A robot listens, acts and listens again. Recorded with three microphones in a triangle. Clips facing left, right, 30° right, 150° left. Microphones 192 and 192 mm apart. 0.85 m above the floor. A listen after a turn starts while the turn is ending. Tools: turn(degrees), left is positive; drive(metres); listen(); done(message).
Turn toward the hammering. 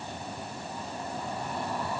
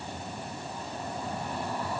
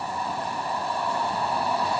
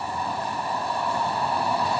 listen()
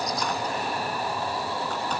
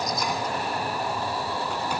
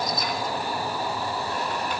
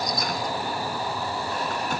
listen()
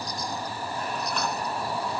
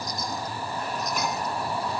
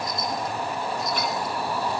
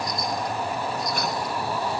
done("I can't make out hammering to turn to.")